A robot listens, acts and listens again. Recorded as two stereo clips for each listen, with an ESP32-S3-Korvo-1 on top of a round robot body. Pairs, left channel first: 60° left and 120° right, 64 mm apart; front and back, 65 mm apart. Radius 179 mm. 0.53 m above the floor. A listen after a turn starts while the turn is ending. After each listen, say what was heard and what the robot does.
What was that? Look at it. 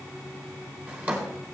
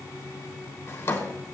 The drawer: 50° right. Turn 50° right.
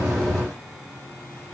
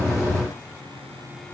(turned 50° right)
Keep listening.
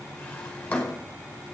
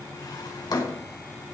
The drawer is now 15° right. Turn 15° right.
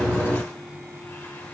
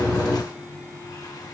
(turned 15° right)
Keep listening.
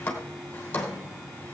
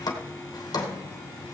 Found it: a drawer, straight ahead.